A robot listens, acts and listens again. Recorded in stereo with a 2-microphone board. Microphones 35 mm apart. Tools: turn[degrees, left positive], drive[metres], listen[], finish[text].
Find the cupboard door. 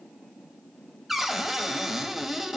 Action: turn[-30]
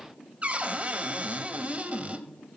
Thought: So it is at 140° right.
Action: turn[-140]
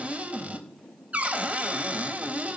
Thought: The cupboard door is now 40° right.
Action: turn[-40]
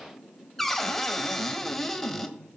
Action: finish[Facing the cupboard door, under 1 m away.]